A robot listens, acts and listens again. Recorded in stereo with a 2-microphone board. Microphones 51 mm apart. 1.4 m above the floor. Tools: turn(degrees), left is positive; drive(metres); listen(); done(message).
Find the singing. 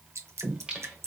turn(degrees=-20)
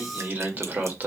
turn(degrees=-40)
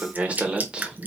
turn(degrees=-15)
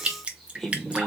turn(degrees=15)
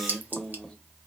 turn(degrees=10)
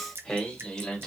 turn(degrees=10)
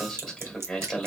done("Facing the singing.")